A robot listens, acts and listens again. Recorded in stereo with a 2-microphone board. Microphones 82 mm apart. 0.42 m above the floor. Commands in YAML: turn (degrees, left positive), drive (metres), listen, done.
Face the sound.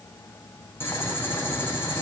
turn: 30
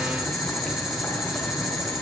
done: "Found it: boiling, straight ahead, over 4 m away."